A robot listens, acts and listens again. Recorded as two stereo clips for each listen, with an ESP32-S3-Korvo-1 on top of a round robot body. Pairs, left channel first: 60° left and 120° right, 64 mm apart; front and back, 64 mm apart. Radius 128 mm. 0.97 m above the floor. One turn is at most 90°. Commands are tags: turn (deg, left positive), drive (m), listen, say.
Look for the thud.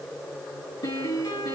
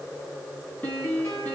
<listen/>
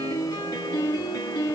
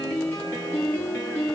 <listen/>
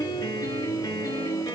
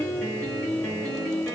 <say>I can't make out a thud, only a piano.</say>